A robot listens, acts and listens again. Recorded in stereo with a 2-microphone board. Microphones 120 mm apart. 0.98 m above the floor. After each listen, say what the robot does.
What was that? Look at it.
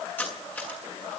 Turn 30° left.
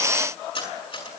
Turn 135° left.
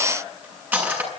Turn 15° right.
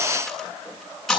Found it: cutlery clinking, straight ahead.